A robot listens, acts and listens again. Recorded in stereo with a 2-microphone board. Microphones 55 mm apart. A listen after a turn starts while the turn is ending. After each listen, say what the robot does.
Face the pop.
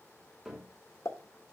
Turn 90° left.
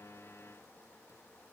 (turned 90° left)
Facing where the pop came from. I can't hear it now.